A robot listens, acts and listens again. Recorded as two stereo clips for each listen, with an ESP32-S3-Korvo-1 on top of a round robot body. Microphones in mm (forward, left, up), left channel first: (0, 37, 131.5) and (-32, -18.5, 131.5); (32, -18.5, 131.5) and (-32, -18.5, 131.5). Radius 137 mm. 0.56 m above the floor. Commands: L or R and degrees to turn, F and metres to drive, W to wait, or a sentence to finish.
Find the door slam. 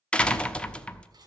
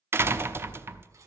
L130
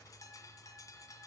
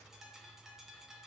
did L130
Facing where the door slam came from. I can't hear it now.